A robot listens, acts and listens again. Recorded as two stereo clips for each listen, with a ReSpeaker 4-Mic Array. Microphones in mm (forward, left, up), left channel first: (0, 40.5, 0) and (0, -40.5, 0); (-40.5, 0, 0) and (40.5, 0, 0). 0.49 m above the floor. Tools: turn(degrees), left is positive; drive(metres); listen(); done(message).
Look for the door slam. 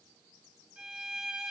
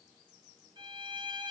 listen()
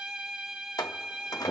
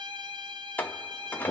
turn(degrees=115)
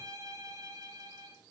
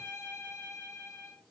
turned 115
done("Facing where the door slam came from. I can't hear it now.")